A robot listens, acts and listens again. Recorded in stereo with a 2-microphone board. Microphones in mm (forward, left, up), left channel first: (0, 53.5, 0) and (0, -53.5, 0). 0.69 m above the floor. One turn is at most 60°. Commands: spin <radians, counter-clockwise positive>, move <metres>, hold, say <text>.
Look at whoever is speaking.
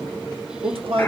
spin -1.05
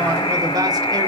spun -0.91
hold
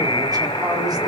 hold
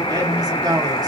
spin -0.79
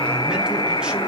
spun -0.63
spin -0.17
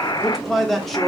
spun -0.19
say Facing the man speaking.